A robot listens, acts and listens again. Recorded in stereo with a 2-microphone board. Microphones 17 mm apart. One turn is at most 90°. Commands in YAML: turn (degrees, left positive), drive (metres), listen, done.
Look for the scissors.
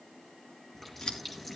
turn: 55
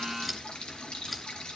done: "Found it: scissors, straight ahead, over 4 m away."